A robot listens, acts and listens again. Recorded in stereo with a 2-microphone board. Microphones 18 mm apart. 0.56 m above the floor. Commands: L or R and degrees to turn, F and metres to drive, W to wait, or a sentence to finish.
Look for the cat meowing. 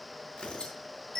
W
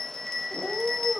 L30
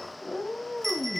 L125
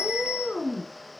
L20
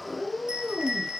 Found it: a cat meowing, straight ahead, over 4 m away.